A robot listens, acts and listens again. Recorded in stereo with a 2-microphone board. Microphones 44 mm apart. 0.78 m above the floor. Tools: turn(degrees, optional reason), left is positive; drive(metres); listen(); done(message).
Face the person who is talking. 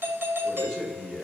turn(degrees=30)
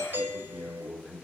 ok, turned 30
turn(degrees=-30, reason="So it is at 30° right.")
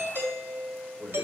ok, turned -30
done("Found it: a man speaking, straight ahead, 2 to 4 m away.")